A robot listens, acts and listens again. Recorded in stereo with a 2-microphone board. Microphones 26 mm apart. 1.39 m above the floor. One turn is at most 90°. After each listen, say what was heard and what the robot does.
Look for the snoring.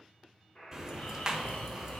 The snoring: about 65° left or 115° left. Turn 65° left.
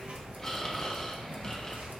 So it is at 20° left. Turn 20° left.
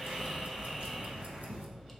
Found it: snoring, straight ahead, 1 to 2 m away.